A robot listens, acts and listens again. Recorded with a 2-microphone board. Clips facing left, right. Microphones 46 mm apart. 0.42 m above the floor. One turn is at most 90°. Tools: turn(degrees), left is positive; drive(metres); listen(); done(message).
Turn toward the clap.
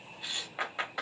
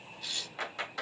turn(degrees=20)
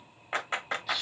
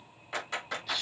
turn(degrees=90)
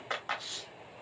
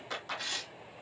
turn(degrees=50)
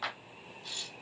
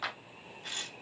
done("Facing the clap, 2 to 4 m away.")